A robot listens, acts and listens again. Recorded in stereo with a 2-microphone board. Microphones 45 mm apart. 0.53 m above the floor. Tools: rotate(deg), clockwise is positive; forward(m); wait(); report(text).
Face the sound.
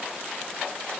wait()
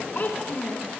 rotate(-40)
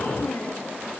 rotate(-105)
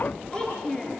rotate(-20)
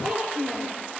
report("Found it: a child speaking, straight ahead.")